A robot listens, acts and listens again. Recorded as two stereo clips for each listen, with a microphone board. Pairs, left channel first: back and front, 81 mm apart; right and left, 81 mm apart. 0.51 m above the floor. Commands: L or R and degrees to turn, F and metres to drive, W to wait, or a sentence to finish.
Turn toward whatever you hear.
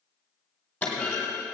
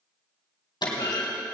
R105
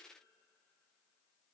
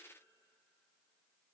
Facing where the clunk came from. I can't hear it now.